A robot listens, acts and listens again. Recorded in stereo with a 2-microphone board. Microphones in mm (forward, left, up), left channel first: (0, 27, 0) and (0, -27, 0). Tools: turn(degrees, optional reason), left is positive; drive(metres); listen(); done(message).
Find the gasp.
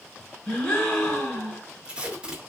turn(degrees=30)
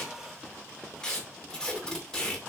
listen()
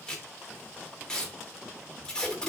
done("I heard a gasp, but can't make it out now. It was about 15° right or 135° left.")